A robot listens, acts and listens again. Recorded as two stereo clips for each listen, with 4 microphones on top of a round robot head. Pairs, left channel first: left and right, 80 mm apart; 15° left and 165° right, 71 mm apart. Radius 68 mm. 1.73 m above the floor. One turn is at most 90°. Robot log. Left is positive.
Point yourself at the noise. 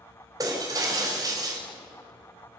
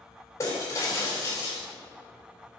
note: The breaking glass: 45° right.
cmd yaw -45
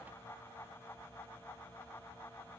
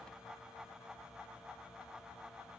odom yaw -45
end: I heard breaking glass from this way, but can't make it out now.